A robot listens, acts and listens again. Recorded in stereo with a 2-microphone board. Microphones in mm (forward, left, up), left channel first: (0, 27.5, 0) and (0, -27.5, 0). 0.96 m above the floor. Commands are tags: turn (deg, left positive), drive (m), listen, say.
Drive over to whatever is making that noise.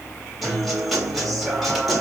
<turn deg="30"/>
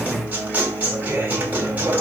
<turn deg="-30"/>
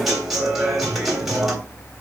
<drive m="1.0"/>
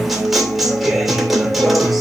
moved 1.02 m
<drive m="1.0"/>
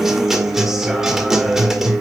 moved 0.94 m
<drive m="1.0"/>
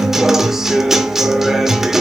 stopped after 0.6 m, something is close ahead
<say>Arrived at the guitar, straight ahead.</say>